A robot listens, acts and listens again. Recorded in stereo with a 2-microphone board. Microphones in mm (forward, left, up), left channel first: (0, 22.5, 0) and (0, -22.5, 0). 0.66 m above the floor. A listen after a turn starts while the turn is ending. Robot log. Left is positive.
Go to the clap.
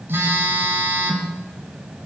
cmd idle
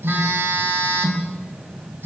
cmd idle
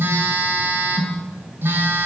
end: I can't make out a clap, only a phone buzzing.